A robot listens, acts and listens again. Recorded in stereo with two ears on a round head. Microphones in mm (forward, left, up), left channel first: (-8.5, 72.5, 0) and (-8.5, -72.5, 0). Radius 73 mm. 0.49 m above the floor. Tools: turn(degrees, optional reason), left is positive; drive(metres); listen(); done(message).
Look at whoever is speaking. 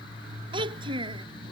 turn(degrees=-30, reason="The child speaking: about 30° right or 150° right.")
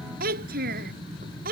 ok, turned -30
turn(degrees=-115, reason="So it is at 115° right.")
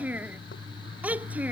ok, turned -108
turn(degrees=-10, reason="The child speaking is now 10° right.")
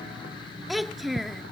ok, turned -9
done("Found it: a child speaking, straight ahead.")